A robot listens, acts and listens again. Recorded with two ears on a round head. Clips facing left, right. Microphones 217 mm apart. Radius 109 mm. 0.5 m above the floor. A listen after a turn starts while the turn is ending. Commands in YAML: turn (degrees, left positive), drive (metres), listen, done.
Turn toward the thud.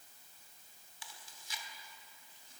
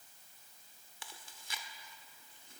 listen: true
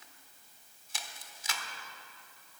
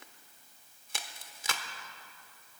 listen: true
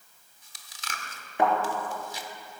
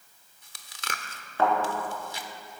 turn: 15
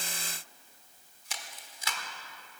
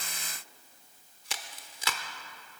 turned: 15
listen: true
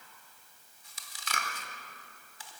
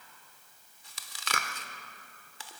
done: "I heard a thud, but can't make it out now. It was about straight ahead or 150° left."